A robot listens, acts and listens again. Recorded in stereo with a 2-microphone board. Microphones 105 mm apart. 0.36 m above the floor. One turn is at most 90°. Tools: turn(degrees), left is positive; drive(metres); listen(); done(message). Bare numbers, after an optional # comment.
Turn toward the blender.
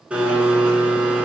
turn(-30)
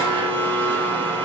# So it is at 20° left.
turn(20)
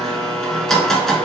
done("Facing the blender, under 1 m away.")